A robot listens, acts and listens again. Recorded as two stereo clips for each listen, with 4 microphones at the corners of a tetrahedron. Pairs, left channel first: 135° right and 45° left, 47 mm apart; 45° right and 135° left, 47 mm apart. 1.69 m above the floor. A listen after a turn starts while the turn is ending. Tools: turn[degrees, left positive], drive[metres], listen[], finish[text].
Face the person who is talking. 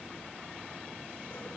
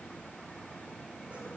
Action: listen[]
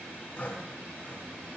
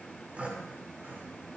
Action: listen[]
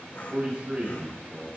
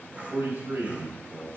Thought: The man speaking: 105° left.
Action: turn[105]
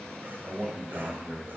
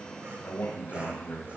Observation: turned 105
Thought: The man speaking is now 10° right.
Action: turn[-10]
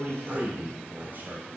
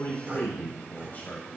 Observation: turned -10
Action: finish[Found it: a man speaking, straight ahead.]